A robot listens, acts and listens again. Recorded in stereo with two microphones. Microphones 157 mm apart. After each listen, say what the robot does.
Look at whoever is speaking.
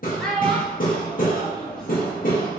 Turn 30° left.
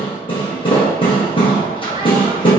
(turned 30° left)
Keep listening.
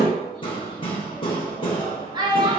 Turn 30° right.
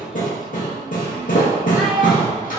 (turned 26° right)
Keep listening.
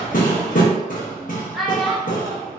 Found it: a child speaking, straight ahead.